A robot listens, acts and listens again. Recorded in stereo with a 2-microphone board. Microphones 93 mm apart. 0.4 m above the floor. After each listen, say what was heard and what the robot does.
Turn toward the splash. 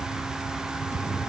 Turn 30° right.
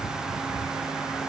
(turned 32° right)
Keep listening.
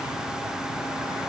I heard a splash, but can't make it out now. It was about 25° left or 140° right.